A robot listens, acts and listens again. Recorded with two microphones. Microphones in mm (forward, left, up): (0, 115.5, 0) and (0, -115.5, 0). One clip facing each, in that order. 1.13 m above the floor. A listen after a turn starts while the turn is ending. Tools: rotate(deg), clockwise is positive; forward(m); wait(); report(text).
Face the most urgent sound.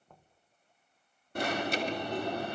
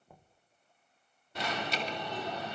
rotate(-50)
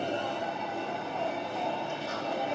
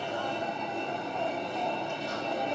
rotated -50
report("Facing the alarm, 2 to 4 m away.")